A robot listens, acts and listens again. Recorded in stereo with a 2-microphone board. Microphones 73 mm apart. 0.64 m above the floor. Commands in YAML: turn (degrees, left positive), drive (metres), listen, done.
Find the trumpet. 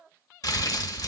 listen: true
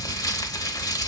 listen: true
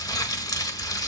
done: "I can't make out a trumpet, only crumpling."